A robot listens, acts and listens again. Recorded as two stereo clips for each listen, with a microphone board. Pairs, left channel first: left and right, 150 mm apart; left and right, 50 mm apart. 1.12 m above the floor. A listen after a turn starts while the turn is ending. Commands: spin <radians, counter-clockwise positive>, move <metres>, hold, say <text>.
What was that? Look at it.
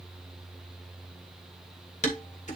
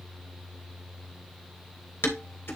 spin 0.87
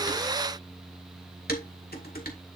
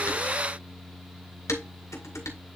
spin 1.40
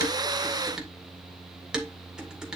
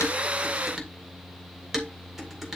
say Facing the dishes clattering, 2 to 4 m away.